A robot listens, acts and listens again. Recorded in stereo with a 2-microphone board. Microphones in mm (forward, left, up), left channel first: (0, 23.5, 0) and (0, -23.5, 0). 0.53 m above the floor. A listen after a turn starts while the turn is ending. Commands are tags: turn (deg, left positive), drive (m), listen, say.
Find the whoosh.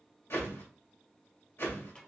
<turn deg="65"/>
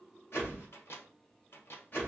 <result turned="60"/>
<turn deg="45"/>
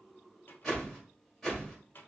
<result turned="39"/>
<say>Facing the whoosh, 2 to 4 m away.</say>